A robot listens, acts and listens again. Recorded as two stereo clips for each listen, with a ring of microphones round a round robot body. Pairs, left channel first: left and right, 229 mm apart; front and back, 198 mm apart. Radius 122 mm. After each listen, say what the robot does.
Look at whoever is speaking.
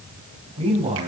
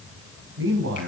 Turn 155° right.
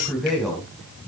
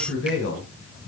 Found it: a man speaking, straight ahead, over 4 m away.